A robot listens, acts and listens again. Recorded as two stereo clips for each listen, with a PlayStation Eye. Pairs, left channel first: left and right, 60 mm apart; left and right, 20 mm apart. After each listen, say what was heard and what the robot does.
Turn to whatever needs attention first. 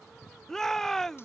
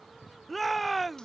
Turn 30° left.
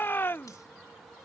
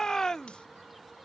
So it is at 140° left. Turn 140° left.
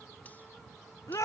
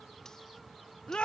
The shout is now 65° left. Turn 65° left.
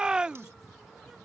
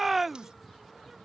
The shout is now 15° right. Turn 15° right.
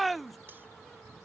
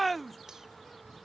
Facing the shout.